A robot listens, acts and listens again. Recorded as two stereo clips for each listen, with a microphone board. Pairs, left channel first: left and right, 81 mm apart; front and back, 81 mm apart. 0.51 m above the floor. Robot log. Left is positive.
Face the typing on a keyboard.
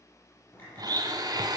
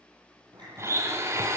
note: The typing on a keyboard: 155° left.
cmd yaw +155
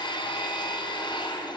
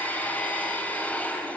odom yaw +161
cmd idle
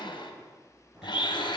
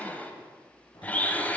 cmd idle
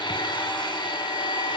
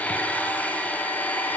end: Facing where the typing on a keyboard came from. I can't hear it now.